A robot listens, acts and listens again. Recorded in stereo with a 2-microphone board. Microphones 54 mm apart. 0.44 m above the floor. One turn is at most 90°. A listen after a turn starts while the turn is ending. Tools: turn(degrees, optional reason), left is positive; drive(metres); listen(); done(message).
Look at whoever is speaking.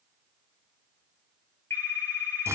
listen()
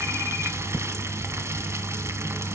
listen()
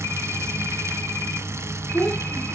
turn(degrees=30, reason="The child speaking: about 30° left or 150° left.")
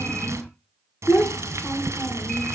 turn(degrees=90, reason="So it is at 135° left.")
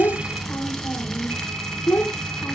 turn(degrees=35, reason="The child speaking is now 35° left.")
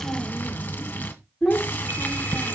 done("Facing the child speaking, 1 to 2 m away.")